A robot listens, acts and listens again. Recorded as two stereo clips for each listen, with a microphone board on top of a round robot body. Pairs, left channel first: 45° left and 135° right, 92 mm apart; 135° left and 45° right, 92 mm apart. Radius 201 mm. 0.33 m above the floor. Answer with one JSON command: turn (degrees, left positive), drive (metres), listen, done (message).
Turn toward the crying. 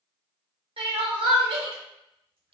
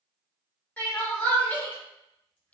{"turn": -150}
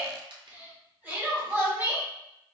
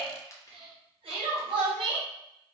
{"turn": -65}
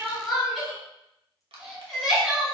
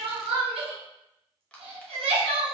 {"turn": -45}
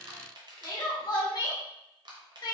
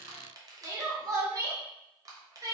{"done": "Found it: crying, straight ahead, 1 to 2 m away."}